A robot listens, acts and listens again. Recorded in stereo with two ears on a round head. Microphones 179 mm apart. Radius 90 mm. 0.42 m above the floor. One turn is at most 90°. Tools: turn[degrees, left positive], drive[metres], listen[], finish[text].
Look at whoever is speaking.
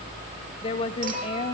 Thought: The woman speaking: about 30° left or 150° left.
Action: turn[30]
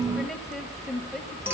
Action: finish[Found it: a woman speaking, straight ahead.]